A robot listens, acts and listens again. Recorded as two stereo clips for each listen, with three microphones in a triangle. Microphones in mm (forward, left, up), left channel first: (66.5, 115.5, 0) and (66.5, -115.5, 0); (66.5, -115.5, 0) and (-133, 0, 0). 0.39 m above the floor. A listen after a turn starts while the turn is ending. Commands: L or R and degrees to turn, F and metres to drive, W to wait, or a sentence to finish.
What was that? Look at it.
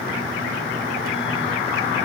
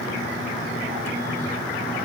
W
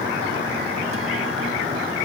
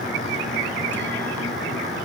W
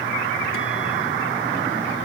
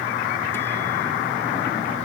I can't make out anything to turn to.